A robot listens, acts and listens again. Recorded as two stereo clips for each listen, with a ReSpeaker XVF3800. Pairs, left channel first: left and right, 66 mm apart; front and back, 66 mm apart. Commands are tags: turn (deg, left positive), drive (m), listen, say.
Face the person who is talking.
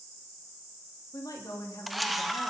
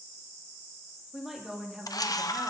<turn deg="100"/>
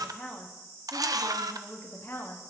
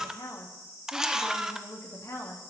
<turn deg="35"/>
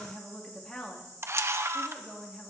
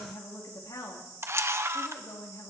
<say>Facing the woman speaking.</say>